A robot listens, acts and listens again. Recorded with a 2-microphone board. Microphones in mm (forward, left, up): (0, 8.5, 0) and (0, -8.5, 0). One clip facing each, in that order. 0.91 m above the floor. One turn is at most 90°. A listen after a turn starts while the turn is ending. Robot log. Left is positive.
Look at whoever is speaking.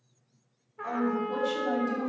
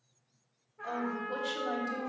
note: The woman speaking: about 25° right or 155° right.
cmd yaw -25
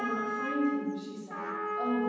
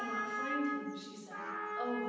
note: So it is at 135° right.
cmd yaw -90
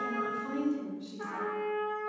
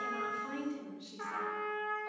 note: The woman speaking is now 60° right.
cmd yaw -60
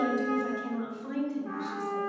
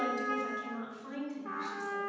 end: Facing the woman speaking, 2 to 4 m away.